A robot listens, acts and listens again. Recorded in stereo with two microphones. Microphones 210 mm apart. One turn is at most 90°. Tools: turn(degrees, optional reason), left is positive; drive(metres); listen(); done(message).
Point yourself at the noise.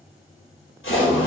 turn(degrees=75, reason="The splash: about 75° left or 105° left.")
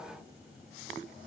listen()
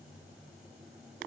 done("I heard a splash, but can't make it out now. It was about straight ahead or 30° left.")